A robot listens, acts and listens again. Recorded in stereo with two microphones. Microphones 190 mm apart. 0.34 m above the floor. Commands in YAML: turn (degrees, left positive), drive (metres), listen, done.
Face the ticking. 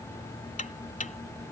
turn: 40
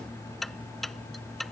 done: "Facing the ticking."